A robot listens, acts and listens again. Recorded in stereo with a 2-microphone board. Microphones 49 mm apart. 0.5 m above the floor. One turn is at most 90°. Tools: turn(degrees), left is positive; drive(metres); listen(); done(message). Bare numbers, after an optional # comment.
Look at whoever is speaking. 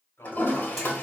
# The man speaking: about 60° left or 120° left.
turn(60)
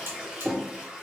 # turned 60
listen()
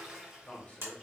# So it is at 45° left.
turn(45)
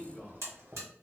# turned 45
# The man speaking is now 10° left.
turn(10)
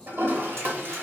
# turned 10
listen()
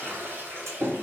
listen()
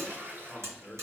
done("Found it: a man speaking, straight ahead.")